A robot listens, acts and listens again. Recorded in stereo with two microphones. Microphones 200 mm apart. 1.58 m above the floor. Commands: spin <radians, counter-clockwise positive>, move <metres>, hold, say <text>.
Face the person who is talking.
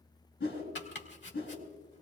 hold
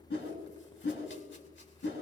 hold
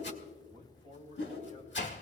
spin -0.61
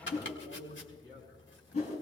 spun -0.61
spin -1.92
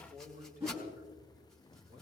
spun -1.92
spin -0.79
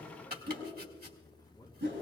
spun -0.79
spin 0.26
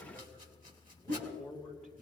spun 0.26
say Found it: a man speaking, straight ahead, over 4 m away.